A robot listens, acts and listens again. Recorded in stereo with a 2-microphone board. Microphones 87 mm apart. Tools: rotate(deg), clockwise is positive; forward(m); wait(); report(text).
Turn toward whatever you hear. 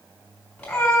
rotate(-30)
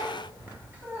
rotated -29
rotate(25)
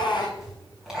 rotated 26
rotate(10)
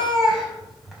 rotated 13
report("Facing the cat meowing.")